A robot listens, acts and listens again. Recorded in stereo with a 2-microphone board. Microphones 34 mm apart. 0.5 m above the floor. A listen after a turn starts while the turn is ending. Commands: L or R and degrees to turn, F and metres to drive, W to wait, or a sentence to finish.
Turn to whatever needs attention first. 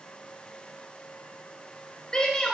L25
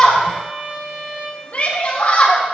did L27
L125
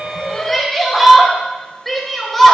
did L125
Facing the shout.